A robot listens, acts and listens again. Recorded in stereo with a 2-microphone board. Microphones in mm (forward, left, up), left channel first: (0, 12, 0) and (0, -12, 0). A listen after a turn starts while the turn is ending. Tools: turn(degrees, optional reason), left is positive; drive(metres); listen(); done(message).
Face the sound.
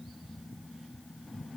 listen()
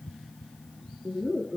turn(degrees=-35, reason="The laughter: about 35° right or 145° right.")
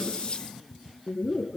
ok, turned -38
done("Found it: laughter, straight ahead, 2 to 4 m away.")